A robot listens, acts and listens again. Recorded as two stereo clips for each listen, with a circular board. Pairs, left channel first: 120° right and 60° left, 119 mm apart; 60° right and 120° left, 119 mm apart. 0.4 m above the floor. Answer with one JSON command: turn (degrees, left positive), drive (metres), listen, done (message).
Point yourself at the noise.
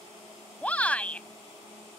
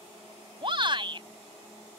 {"turn": 160}
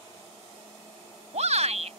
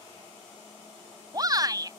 {"turn": 65}
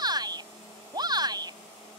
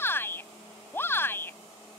{"turn": 10}
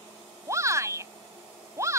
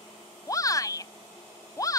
{"done": "Found it: a shout, straight ahead."}